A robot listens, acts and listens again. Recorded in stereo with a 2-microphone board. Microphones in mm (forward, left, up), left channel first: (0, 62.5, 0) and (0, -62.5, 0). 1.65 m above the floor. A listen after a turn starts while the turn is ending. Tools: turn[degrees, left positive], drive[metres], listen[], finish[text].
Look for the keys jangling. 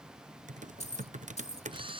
Thought: The keys jangling: about 60° left or 120° left.
Action: turn[60]
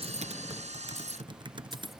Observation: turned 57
Action: listen[]
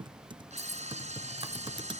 Action: listen[]
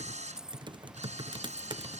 Action: finish[Facing the keys jangling.]